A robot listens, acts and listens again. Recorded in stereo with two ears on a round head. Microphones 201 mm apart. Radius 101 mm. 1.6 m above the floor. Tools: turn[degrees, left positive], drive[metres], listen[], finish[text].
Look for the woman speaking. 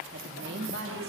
Thought: The woman speaking: about 45° right or 135° right.
Action: turn[-45]
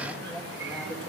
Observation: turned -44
Action: listen[]
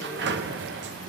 Action: listen[]
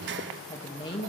Thought: So it is at 25° left.
Action: turn[25]
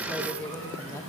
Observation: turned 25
Thought: The woman speaking is now 15° left.
Action: turn[15]
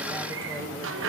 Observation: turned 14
Action: listen[]
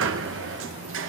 Action: listen[]
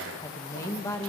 Thought: The woman speaking is now 15° left.
Action: turn[15]
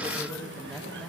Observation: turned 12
Action: finish[Facing the woman speaking, 1 to 2 m away.]